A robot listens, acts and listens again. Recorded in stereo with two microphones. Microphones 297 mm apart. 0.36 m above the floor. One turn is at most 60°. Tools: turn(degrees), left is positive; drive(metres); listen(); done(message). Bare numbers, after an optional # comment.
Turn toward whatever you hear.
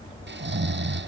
# The snoring: about 35° right or 145° right.
turn(-35)
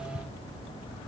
listen()
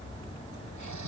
# So it is at 105° right.
turn(-60)
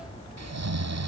# The snoring is now 60° right.
turn(-60)
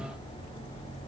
listen()
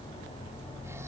listen()
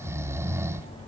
# The snoring is now 10° right.
turn(-10)
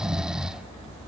done("Facing the snoring.")